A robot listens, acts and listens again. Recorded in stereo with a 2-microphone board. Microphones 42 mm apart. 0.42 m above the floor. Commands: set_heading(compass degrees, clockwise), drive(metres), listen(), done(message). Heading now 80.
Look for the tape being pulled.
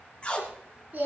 set_heading(55)
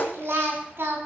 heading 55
set_heading(285)
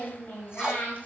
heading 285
listen()
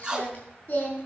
set_heading(305)
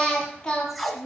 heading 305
done("Found it: tape being pulled, straight ahead, 1 to 2 m away.")